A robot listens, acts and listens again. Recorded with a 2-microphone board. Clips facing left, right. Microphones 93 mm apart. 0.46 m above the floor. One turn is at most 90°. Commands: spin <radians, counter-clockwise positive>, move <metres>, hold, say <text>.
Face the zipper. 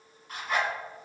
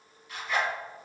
spin 0.70
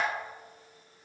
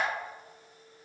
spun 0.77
hold
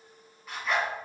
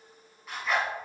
say Facing the zipper.